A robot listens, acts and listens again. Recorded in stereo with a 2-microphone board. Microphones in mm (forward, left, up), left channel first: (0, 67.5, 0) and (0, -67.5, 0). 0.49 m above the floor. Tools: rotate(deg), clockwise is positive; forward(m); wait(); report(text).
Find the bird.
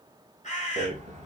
rotate(-60)
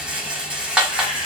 wait()
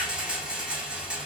wait()
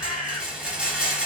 rotate(-45)
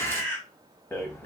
rotate(-15)
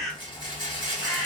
report("Facing the bird, 1 to 2 m away.")